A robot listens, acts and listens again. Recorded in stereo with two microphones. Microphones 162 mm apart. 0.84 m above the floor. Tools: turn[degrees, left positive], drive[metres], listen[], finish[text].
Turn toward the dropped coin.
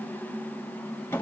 Action: listen[]
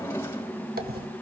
Action: turn[-90]
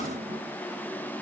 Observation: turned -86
Action: finish[I heard a dropped coin from this way, but can't make it out now.]